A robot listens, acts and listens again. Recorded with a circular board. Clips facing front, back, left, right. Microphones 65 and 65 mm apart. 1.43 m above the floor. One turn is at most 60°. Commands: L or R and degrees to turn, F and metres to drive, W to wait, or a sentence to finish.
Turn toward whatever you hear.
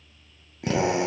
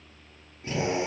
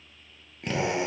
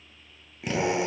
Facing the drill.